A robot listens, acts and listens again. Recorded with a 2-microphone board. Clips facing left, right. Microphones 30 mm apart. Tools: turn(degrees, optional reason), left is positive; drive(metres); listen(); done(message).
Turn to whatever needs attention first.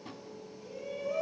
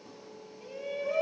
turn(degrees=-55, reason="The shout: about 55° right or 125° right.")
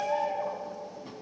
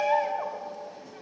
turn(degrees=-65, reason="So it is at 65° right.")
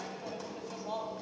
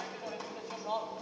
turn(degrees=-20, reason="The shout is now 20° right.")
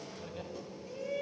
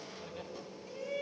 done("Found it: a shout, straight ahead.")